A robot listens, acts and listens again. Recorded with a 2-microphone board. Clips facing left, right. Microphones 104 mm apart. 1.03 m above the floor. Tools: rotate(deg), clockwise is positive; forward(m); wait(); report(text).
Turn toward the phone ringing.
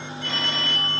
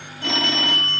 rotate(90)
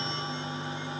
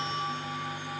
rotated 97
wait()
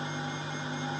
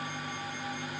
wait()
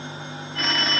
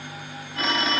report("Found it: a phone ringing, straight ahead.")